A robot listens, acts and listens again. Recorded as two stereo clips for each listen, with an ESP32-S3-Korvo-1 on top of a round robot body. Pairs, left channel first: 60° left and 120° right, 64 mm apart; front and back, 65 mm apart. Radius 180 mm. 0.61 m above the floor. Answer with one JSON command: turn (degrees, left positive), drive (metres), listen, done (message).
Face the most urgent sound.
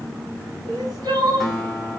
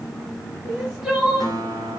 {"turn": -100}
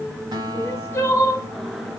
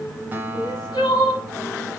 {"done": "Found it: crying, straight ahead."}